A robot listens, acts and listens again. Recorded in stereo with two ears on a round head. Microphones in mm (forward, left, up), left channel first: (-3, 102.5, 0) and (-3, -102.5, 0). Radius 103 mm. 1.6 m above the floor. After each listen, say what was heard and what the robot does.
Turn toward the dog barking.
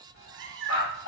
The dog barking: about 60° left or 120° left. Turn 60° left.
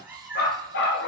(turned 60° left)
So it is at 50° left. Turn 50° left.
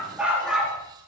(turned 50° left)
Facing the dog barking, 2 to 4 m away.